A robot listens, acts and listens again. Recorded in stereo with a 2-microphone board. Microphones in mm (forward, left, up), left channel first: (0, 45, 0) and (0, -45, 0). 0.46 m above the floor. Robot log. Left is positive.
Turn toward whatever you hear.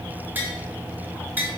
note: The tapping: about 20° right or 160° right.
cmd yaw -20
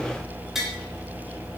end: Facing the tapping.